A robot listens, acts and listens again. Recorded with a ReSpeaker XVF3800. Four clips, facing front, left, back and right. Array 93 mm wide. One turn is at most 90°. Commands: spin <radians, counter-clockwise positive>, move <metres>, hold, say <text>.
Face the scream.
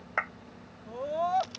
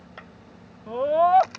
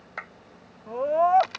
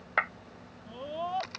spin 1.57
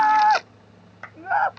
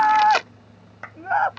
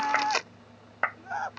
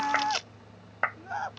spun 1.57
spin 0.79
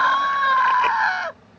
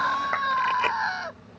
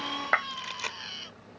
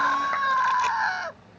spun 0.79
say Found it: a scream, straight ahead.